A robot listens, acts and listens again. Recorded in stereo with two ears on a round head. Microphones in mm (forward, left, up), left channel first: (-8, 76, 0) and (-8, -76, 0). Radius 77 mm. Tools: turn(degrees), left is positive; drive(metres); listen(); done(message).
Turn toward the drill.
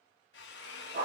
turn(degrees=75)
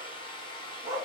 turn(degrees=30)
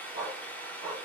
turn(degrees=10)
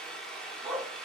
done("Facing the drill, under 1 m away.")